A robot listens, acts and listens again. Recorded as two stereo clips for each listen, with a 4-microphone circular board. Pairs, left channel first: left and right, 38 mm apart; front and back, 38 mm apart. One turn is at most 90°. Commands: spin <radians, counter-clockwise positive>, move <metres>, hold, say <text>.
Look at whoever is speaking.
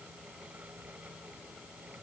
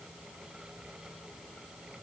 hold
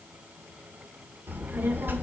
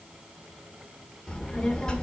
spin -1.22
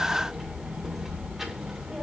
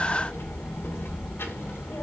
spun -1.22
spin -0.26
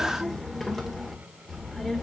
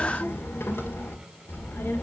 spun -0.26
say Facing the child speaking, 1 to 2 m away.